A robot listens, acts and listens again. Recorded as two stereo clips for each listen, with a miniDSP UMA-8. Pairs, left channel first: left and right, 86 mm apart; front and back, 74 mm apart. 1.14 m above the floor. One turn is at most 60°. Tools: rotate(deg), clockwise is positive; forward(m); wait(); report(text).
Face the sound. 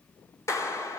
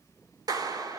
rotate(-60)
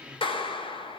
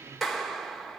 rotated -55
rotate(-60)
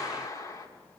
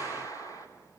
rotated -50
rotate(-40)
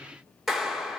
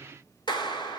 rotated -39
report("Facing the clap, 2 to 4 m away.")